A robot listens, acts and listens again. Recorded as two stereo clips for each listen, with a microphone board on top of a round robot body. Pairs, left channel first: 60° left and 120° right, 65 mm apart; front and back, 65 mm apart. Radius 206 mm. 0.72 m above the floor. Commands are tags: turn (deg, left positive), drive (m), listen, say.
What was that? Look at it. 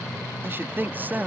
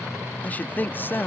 <turn deg="-55"/>
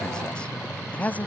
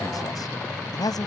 <say>Facing the man speaking.</say>